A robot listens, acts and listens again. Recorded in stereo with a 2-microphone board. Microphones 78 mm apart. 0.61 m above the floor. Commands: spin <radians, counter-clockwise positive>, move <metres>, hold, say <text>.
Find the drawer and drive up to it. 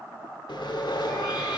hold
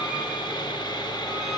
hold
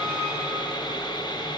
say I can't make out a drawer, only sawing.